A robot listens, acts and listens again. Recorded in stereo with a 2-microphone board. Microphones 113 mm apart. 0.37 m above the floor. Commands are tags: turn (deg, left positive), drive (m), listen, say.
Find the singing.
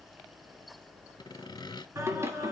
<turn deg="-25"/>
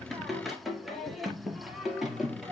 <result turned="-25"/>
<say>Facing the singing.</say>